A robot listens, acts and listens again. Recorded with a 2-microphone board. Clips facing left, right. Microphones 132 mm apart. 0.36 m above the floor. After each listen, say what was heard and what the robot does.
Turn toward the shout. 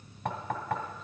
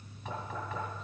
Keep listening.
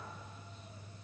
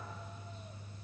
Keep listening.
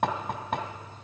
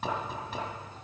I can't make out a shout, only knocking.